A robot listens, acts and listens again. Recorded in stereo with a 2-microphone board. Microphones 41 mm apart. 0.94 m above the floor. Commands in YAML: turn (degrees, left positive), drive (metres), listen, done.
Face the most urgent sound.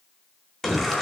turn: 30
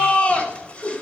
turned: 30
turn: 145
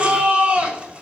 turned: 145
turn: -30
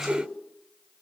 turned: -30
listen: true
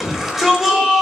done: "Facing the shout."